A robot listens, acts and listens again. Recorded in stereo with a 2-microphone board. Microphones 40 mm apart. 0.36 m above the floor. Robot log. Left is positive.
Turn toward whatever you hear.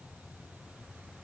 cmd idle
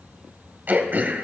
note: The throat clearing: about 50° right or 130° right.
cmd yaw -50
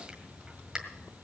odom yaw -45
note: So it is at 20° right.
cmd yaw -20
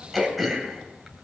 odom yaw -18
end: Found it: throat clearing, straight ahead.